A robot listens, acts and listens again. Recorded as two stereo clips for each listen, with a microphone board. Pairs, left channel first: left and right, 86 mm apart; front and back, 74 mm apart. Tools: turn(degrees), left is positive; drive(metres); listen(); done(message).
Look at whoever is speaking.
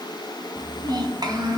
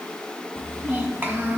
turn(degrees=-120)
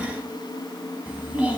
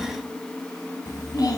turn(degrees=-20)
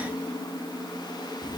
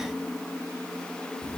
listen()
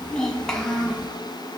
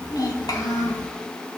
turn(degrees=10)
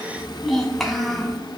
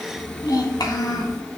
done("Found it: a child speaking, straight ahead.")